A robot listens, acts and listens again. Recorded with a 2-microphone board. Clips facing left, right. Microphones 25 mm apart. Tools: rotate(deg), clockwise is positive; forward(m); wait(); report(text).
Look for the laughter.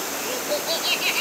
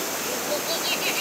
rotate(-15)
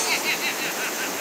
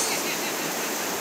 rotate(-150)
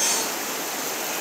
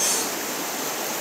wait()
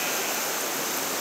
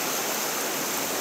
wait()
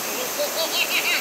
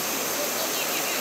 rotate(-45)
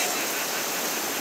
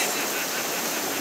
wait()
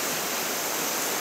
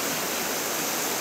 wait()
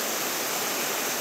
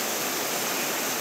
report("Facing where the laughter came from. I can't hear it now.")